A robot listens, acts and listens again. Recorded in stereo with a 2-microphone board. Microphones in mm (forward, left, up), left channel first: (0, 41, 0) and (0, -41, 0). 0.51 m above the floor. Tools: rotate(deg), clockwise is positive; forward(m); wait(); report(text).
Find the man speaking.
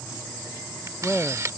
rotate(-15)
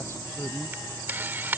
rotate(-150)
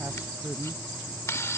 rotate(20)
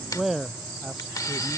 report("Found it: a man speaking, straight ahead.")